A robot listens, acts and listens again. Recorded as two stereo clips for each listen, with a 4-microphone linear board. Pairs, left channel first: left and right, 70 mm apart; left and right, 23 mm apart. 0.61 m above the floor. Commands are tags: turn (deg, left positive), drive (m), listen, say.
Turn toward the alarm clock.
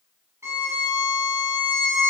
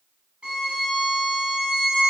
<listen/>
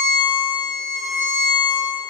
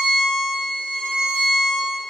<listen/>
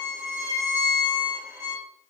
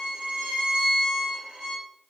<say>I can't make out an alarm clock to turn to.</say>